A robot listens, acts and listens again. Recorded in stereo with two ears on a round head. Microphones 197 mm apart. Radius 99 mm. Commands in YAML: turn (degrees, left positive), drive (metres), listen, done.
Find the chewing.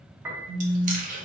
turn: -35
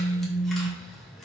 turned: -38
listen: true
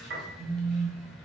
listen: true
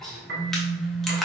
done: "Found it: chewing, straight ahead, under 1 m away."